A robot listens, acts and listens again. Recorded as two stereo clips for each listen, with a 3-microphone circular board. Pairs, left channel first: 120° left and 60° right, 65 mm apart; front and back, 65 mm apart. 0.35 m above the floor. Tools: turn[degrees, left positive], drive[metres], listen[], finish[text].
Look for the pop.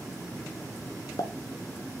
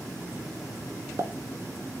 Thought: The pop: 140° left.
Action: turn[140]
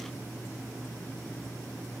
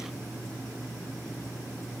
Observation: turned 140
Action: finish[Facing where the pop came from. I can't hear it now.]